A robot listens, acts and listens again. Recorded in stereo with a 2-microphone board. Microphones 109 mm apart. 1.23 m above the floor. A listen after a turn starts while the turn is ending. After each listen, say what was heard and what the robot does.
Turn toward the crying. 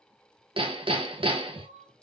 Turn 90° right.
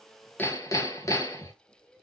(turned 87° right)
Facing the crying.